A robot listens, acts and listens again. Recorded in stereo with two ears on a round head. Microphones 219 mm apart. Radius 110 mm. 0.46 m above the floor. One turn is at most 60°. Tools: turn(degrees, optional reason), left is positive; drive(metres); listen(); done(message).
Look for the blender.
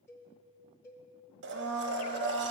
turn(degrees=-50, reason="The blender: about 50° right or 130° right.")
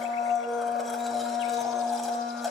done("Found it: a blender, straight ahead.")